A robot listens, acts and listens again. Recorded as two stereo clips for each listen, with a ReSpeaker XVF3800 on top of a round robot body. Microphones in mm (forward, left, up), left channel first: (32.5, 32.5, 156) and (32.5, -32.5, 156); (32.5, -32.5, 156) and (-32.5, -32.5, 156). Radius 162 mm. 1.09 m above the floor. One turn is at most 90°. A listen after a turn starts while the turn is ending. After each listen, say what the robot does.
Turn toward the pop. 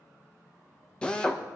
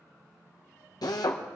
Keep listening.
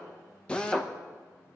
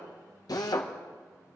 Keep listening.
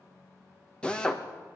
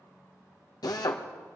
I can't make out a pop to turn to.